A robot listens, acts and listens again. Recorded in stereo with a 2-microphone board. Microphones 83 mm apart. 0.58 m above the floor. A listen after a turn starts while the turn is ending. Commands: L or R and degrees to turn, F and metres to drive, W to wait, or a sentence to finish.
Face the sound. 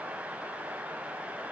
W
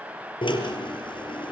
L90
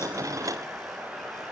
W
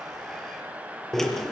Facing the drill, over 4 m away.